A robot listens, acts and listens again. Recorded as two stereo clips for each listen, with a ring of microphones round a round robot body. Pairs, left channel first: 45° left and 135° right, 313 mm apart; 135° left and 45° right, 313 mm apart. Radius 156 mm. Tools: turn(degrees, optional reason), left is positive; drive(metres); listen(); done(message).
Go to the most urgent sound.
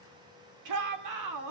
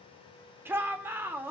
turn(degrees=-125, reason="The shout: 125° right.")
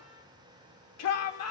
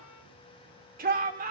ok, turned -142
turn(degrees=15, reason="The shout is now 15° left.")
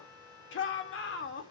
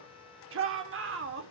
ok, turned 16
drive(metres=1.0)
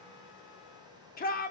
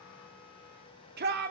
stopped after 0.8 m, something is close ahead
done("I am next to the shout.")